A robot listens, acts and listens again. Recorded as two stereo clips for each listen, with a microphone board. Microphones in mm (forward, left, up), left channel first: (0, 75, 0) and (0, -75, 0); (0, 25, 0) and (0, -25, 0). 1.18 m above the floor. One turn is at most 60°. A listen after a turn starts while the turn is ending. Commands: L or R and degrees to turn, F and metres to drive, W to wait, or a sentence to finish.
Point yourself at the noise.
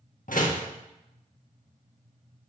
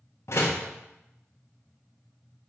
L60
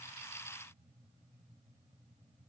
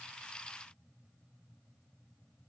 W
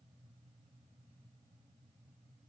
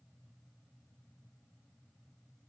I heard a door slam, but can't make it out now. It was about 5° left or 55° left.